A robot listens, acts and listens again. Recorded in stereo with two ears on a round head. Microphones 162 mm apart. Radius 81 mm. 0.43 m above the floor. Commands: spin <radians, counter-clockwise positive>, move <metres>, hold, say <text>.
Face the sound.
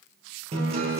spin -0.61
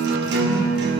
spin -1.92
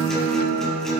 say Found it: a guitar, straight ahead, 2 to 4 m away.